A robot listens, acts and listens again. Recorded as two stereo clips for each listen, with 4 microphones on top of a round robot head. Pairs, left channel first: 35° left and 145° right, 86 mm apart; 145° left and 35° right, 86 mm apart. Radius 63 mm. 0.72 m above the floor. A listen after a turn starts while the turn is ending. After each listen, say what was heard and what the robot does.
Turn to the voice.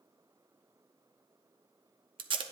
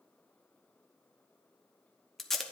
Keep listening.
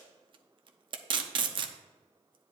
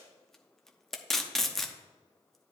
Keep listening.
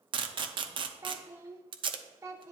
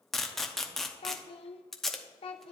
The child speaking: 160° left. Turn 160° left.
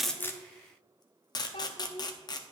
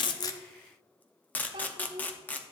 Found it: a child speaking, straight ahead.